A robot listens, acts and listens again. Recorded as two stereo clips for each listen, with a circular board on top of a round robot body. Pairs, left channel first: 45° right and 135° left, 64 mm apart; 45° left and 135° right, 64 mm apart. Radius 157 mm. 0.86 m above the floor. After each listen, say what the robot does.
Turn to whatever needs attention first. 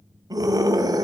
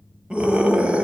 Turn 150° left.
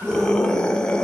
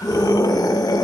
Turn 30° left.
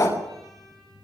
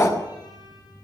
Facing the scream.